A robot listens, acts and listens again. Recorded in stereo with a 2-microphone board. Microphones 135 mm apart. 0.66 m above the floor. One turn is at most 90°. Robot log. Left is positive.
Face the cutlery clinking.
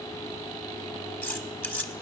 cmd yaw +30
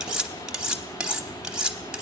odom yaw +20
end: Facing the cutlery clinking.